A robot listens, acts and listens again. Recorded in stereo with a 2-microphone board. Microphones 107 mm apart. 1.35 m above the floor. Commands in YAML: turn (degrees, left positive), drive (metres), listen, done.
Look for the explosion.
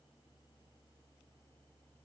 listen: true
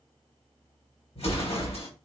turn: 75
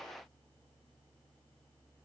listen: true
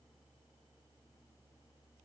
done: "I heard an explosion, but can't make it out now. It was about straight ahead or 30° left."